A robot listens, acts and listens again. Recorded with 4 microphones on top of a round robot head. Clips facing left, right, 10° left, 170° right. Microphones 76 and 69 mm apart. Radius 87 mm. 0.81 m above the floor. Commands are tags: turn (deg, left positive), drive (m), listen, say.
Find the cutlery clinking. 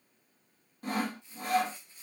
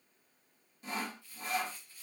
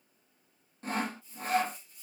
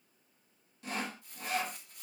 <listen/>
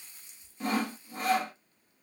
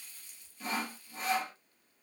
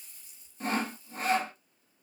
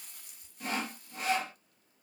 <listen/>
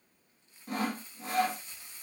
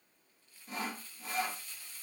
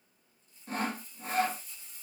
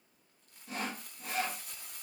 <say>I can't make out cutlery clinking, only crumpling and sawing.</say>